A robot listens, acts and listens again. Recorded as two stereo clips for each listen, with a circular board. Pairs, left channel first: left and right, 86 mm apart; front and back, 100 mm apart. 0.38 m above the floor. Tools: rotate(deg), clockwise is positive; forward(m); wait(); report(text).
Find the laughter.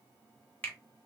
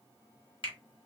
wait()
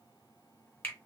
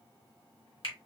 wait()
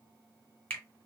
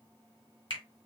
report("I can't make out laughter, only a finger snap.")